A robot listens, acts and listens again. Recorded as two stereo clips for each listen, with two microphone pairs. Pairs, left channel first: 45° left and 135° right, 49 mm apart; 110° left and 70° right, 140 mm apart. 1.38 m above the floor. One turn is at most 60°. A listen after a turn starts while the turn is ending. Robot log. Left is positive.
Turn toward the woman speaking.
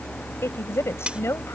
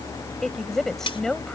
note: The woman speaking: 25° left.
cmd yaw +25
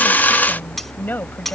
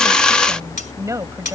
end: Found it: a woman speaking, straight ahead.